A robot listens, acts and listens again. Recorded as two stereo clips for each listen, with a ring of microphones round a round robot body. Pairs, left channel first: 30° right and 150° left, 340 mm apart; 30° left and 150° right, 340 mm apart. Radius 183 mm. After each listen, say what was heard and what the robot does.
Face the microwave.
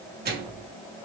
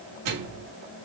The microwave: 150° right. Turn 150° right.
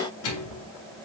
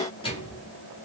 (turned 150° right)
The microwave is now 45° right. Turn 45° right.
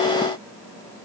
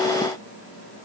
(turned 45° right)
Keep listening.
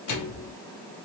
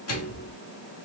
Found it: a microwave, straight ahead.